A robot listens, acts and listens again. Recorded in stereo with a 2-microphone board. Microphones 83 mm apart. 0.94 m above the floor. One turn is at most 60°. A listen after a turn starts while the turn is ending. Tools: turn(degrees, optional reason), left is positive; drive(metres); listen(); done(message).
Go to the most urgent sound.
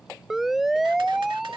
turn(degrees=-30)
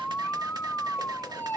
turn(degrees=25, reason="So it is at 25° left.")
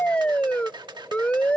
turn(degrees=15, reason="The siren is now 15° left.")
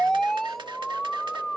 drive(metres=1.0)
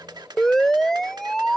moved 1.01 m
drive(metres=1.0)
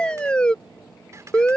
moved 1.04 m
turn(degrees=10, reason="The siren is now 10° left.")
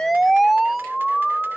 drive(metres=1.0)
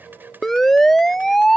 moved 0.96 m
drive(metres=1.0)
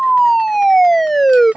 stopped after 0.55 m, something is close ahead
done("Arrived at the siren, straight ahead.")